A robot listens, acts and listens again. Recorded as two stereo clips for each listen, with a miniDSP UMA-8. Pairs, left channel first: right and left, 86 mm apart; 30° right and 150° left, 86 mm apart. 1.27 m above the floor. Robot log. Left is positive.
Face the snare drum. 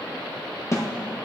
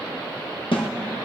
note: The snare drum: 35° right.
cmd yaw -35
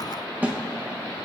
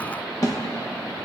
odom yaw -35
note: The snare drum is now 20° left.
cmd yaw +20
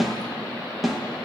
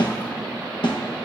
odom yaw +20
end: Found it: a snare drum, straight ahead, 1 to 2 m away.